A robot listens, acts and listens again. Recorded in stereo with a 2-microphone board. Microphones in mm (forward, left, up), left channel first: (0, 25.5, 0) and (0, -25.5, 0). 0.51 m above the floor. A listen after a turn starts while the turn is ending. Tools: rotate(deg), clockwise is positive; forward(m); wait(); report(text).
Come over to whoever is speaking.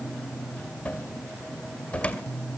wait()
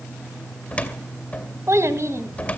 rotate(65)
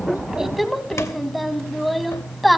forward(1.0)
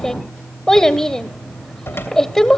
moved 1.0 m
rotate(-10)
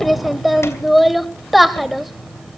forward(1.0)
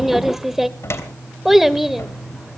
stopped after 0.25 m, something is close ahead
report("Arrived at the child speaking, straight ahead.")